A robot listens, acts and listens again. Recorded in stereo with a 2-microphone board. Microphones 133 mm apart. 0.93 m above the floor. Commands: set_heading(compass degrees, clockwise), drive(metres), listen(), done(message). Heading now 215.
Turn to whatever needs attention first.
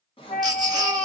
set_heading(245)
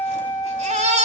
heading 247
set_heading(357)
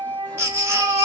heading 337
set_heading(357)
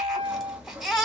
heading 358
done("Found it: a baby crying, straight ahead, 1 to 2 m away.")